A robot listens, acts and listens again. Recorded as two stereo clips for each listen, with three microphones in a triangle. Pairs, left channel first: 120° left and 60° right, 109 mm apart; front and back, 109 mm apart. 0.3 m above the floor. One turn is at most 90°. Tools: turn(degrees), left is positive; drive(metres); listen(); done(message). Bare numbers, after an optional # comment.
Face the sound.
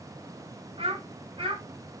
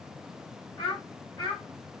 # The child speaking: 35° right.
turn(-35)
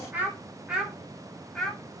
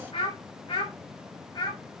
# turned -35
# The child speaking is now 35° left.
turn(35)
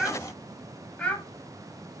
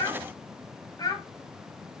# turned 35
# The child speaking is now 45° left.
turn(45)
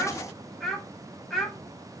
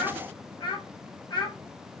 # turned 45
# The child speaking is now 30° left.
turn(30)
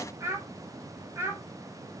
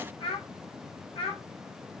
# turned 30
done("Found it: a child speaking, straight ahead, 1 to 2 m away.")